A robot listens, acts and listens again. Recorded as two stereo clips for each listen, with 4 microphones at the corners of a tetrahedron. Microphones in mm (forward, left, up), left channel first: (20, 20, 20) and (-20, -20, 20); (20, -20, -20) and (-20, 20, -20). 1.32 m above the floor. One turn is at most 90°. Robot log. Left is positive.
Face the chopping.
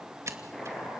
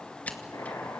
note: The chopping: 40° right.
cmd yaw -40
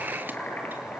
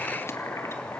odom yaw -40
note: The chopping is now 15° right.
cmd yaw -15
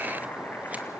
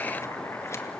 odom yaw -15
end: Facing the chopping, over 4 m away.